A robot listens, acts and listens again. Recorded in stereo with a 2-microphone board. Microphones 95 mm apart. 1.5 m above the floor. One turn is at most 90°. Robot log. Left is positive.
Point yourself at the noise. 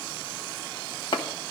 note: The chopping: about 60° left or 120° left.
cmd yaw +60
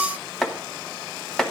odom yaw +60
end: Found it: chopping, straight ahead, 1 to 2 m away.